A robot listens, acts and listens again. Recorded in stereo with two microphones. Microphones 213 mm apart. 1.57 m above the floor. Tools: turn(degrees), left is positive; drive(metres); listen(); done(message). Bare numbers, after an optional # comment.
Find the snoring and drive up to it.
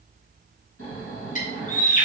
turn(90)
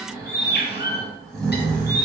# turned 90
drive(1.0)
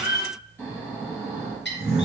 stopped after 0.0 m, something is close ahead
# The snoring is now 10° left.
turn(10)
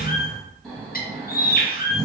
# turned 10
done("Blocked. The snoring is further on, straight ahead.")